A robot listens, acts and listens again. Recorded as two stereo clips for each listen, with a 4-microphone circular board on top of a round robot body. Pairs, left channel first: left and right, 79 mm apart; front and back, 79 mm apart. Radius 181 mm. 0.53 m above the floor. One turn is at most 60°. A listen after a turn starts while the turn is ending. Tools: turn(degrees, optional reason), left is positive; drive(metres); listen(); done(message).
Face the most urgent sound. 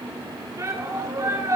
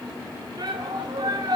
turn(degrees=-60, reason="The shout: 140° right.")
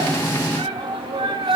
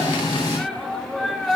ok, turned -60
turn(degrees=-60, reason="The shout is now 85° right.")
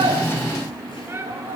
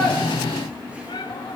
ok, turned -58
turn(degrees=-25, reason="The shout is now 25° right.")
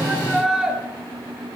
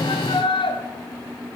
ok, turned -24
done("Facing the shout.")